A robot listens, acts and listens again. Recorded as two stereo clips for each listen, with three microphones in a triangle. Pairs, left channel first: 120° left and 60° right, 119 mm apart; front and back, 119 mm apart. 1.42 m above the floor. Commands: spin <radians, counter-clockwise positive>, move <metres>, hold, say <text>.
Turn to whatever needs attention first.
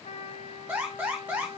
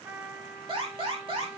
spin -2.36
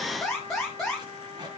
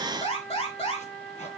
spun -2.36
spin 0.52
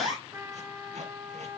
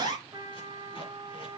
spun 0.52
spin -0.17
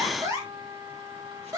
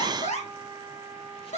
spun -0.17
say Found it: an alarm, straight ahead.